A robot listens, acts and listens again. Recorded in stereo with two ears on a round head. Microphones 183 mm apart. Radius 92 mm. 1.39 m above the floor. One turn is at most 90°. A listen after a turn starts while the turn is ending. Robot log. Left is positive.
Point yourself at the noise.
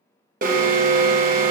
note: The alarm: about 45° right or 135° right.
cmd yaw -45
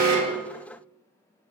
cmd idle
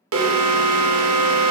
note: So it is at 90° right.
cmd yaw -90
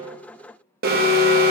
note: The alarm is now 45° right.
cmd yaw -45
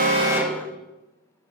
end: Found it: an alarm, straight ahead, 1 to 2 m away.